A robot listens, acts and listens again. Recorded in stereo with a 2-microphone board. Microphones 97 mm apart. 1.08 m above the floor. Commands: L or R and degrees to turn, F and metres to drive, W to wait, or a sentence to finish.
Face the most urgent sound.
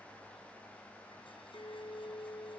W
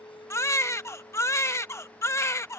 L30
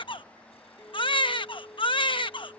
L120
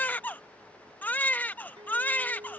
L20
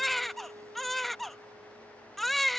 Found it: a baby crying, straight ahead.